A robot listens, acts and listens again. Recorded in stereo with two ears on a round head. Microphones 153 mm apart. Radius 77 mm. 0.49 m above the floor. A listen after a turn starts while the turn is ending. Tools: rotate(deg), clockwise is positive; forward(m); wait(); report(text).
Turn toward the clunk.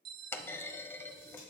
rotate(-30)
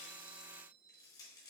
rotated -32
wait()
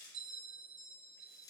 report("I heard a clunk, but can't make it out now. It was about 20° right or 135° left.")